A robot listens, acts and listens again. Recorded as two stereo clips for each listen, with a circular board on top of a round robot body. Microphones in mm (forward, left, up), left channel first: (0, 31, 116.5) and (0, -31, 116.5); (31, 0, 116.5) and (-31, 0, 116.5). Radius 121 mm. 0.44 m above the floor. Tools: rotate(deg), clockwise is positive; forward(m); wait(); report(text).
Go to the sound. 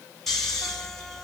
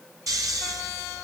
rotate(-175)
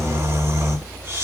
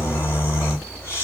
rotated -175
rotate(40)
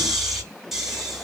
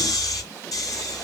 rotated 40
forward(1.0)
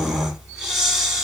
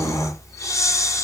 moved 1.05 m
forward(1.0)
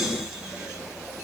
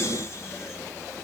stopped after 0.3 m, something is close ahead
wait()
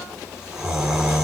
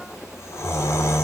rotate(15)
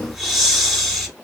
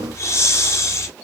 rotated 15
report("Arrived at the snoring, straight ahead.")